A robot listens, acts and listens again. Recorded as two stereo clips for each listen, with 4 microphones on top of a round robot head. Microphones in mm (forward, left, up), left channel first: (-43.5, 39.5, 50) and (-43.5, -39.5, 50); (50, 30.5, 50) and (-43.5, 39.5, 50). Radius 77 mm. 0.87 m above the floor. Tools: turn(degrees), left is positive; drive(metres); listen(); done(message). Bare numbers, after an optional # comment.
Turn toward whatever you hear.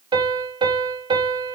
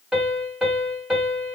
# The piano: 100° right.
turn(-100)
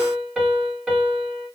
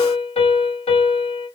# The piano is now 10° right.
turn(-10)
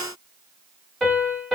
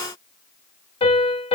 done("Found it: a piano, straight ahead.")